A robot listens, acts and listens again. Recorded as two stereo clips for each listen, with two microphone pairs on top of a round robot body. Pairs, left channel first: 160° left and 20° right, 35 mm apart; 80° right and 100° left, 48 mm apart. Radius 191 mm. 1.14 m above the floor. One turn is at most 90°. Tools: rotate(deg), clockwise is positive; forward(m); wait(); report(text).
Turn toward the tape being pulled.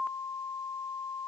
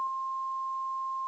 wait()
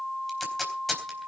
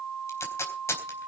rotate(90)
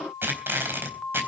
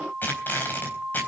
rotate(30)
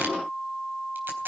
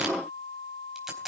rotate(-15)
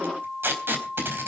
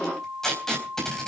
report("Found it: tape being pulled, straight ahead, 2 to 4 m away.")